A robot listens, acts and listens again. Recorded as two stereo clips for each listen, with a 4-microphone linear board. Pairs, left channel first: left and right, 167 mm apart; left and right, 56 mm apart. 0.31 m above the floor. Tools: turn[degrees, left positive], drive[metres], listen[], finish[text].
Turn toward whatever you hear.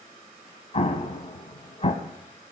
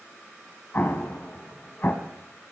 Thought: The explosion: about 40° left or 140° left.
Action: turn[40]
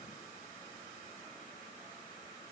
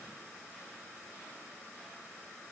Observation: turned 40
Action: listen[]
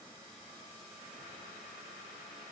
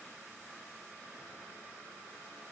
Action: finish[I heard an explosion, but can't make it out now. It was about straight ahead or 100° left.]